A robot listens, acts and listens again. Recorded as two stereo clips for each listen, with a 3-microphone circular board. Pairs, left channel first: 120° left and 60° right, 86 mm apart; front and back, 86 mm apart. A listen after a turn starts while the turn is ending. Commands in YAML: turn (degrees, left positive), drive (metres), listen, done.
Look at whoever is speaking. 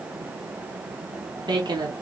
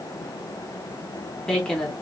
turn: -80
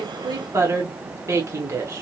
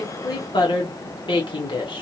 turn: -10
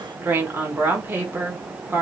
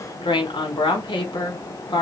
done: "Facing the woman speaking."